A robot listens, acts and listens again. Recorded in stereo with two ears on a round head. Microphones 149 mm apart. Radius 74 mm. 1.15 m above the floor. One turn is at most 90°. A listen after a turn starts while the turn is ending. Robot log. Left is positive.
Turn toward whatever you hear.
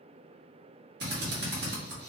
note: The drill: about 60° right or 120° right.
cmd yaw -60
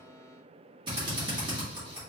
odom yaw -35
note: So it is at 25° right.
cmd yaw -25
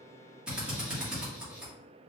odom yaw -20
end: Found it: a drill, straight ahead.